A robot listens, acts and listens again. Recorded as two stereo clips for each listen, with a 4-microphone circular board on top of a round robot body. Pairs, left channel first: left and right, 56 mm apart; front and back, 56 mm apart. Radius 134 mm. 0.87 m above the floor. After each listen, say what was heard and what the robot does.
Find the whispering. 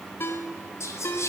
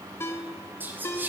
The whispering: 125° left. Turn 125° left.
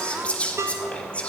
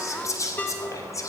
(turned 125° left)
The whispering is now 20° left. Turn 20° left.
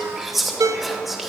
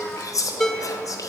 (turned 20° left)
Found it: whispering, straight ahead, 1 to 2 m away.